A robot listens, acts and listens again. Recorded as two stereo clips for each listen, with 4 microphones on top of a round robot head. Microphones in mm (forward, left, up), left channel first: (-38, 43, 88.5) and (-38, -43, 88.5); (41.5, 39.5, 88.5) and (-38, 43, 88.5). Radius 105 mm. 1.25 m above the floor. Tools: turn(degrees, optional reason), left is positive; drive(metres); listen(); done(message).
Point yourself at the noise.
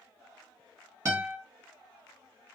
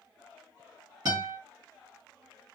turn(degrees=-150, reason="The guitar: 150° right.")
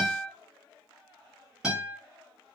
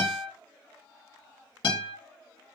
done("Found it: a guitar, straight ahead, 1 to 2 m away.")